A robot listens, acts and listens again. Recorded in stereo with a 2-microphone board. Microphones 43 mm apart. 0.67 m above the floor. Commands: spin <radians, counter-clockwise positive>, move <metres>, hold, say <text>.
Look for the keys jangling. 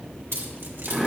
spin -1.22
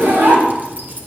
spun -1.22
spin -0.79
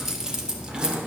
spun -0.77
spin -0.35
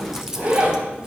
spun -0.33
spin -0.17
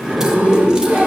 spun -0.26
hold
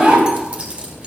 spin -0.44
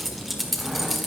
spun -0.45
say Facing the keys jangling.